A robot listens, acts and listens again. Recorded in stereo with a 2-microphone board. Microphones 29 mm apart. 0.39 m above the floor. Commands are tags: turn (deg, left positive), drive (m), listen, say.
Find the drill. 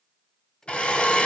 <turn deg="40"/>
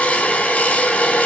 <turn deg="95"/>
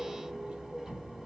<listen/>
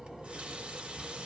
<listen/>
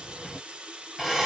<turn deg="-10"/>
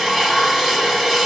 <say>Found it: a drill, straight ahead.</say>